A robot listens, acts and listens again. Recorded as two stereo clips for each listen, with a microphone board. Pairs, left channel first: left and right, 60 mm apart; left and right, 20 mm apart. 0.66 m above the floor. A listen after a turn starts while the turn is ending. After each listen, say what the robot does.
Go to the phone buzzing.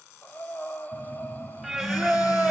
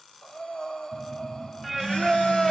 Turn 75° left.
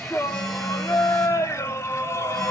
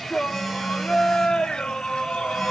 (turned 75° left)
Drive 1.0 m forward.
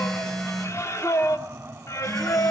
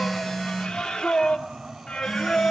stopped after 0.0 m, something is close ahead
Blocked. The phone buzzing is further on, straight ahead.